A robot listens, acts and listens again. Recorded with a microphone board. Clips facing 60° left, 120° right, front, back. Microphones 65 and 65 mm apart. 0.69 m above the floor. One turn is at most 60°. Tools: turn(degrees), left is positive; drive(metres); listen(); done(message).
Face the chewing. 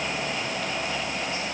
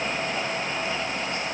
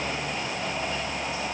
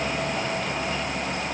listen()
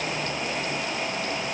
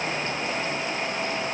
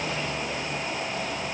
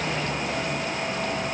listen()
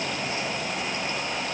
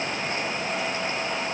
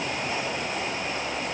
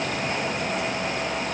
done("I can't make out chewing.")